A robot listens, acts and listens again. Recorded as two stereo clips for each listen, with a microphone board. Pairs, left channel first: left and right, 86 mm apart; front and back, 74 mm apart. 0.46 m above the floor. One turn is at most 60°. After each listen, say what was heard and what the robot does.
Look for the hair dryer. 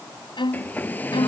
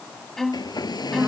The hair dryer: 20° left. Turn 20° left.
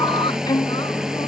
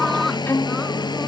Found it: a hair dryer, straight ahead.